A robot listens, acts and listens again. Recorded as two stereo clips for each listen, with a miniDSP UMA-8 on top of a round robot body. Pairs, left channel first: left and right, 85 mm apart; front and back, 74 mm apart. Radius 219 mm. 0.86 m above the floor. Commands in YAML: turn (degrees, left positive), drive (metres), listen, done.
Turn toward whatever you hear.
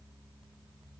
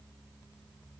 listen: true
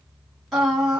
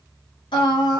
done: "Found it: singing, straight ahead."